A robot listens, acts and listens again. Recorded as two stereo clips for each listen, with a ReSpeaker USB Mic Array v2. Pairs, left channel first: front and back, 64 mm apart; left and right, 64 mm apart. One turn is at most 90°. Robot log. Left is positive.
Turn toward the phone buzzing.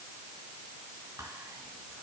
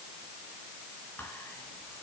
cmd idle
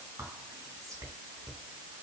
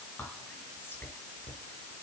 cmd idle
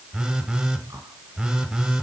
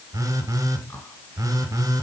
note: The phone buzzing: 105° right.
cmd yaw -90
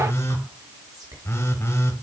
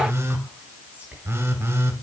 note: The phone buzzing is now 45° right.
cmd yaw -45
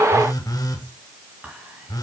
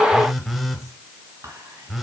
end: Facing the phone buzzing.